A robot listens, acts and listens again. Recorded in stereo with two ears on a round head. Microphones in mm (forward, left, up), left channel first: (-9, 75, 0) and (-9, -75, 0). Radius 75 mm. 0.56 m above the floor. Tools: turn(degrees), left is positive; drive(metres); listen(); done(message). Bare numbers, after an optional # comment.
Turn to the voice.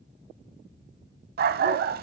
listen()
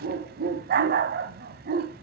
listen()
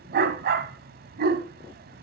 done("I can't make out anyone speaking to turn to.")